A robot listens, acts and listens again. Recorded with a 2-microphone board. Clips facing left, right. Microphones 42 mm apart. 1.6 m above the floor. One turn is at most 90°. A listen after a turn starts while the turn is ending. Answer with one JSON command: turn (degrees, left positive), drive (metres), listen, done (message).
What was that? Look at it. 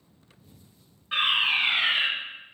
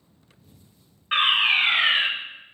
{"turn": -60}
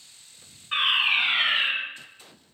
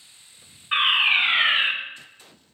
{"turn": -40}
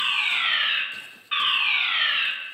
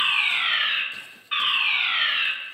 {"done": "Facing the fire alarm."}